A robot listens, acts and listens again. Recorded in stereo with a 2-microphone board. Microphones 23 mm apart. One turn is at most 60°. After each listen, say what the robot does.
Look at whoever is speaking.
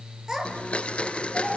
Turn 15° right.
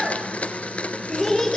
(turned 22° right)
Turn 10° left.
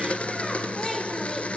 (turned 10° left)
Keep listening.
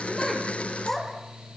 Turn 15° left.
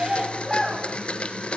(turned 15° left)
Facing the child speaking, over 4 m away.